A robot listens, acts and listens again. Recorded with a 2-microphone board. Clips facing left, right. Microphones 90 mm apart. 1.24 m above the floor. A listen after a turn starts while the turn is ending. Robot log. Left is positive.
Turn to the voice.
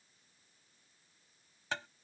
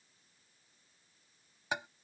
cmd idle
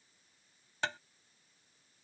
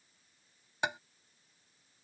cmd idle
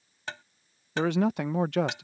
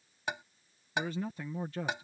cmd yaw +90
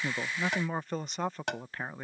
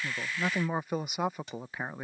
note: So it is at 10° right.
cmd yaw -10
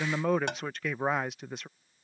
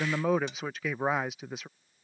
end: Found it: a man speaking, straight ahead.